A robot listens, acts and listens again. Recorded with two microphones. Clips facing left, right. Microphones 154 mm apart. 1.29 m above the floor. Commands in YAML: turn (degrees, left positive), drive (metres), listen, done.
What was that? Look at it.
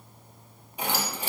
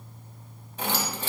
turn: 30
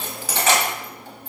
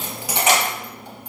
turn: -20
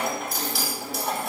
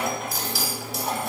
done: "Facing the keys jangling, under 1 m away."